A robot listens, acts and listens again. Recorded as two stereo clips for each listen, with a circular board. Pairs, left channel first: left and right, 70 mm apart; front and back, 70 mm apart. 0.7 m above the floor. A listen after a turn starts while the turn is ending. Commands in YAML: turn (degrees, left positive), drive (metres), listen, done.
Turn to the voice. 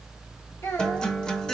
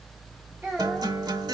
turn: 120
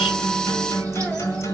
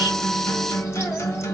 listen: true
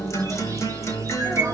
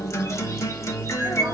listen: true
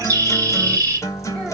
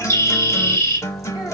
done: "Facing where the child speaking came from. I can't hear it now."